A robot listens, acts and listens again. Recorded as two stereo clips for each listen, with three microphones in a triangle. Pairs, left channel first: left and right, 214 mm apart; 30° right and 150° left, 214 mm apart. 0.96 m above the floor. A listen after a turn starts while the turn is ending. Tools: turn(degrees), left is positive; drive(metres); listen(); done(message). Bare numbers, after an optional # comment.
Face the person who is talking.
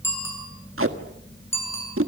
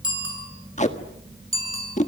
listen()
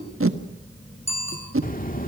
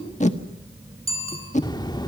# The child speaking: 40° left.
turn(40)
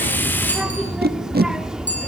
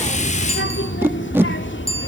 done("Facing the child speaking, 2 to 4 m away.")